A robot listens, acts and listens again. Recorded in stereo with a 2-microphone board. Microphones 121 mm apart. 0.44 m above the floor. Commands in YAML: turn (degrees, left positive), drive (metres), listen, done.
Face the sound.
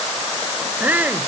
turn: -30
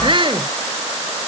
turn: -135
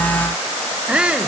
turn: -10
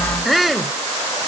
done: "Facing the shout."